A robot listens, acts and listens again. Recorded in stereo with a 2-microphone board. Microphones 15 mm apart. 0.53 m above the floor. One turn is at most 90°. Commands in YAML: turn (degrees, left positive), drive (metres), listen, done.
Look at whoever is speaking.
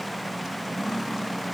listen: true
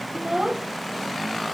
turn: -65
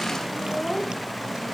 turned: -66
done: "Found it: a child speaking, straight ahead."